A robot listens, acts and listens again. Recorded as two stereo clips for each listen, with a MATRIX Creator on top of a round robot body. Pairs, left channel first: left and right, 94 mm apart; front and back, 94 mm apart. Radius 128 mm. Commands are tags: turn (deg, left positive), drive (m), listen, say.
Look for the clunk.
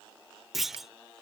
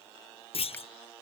<say>Facing the clunk.</say>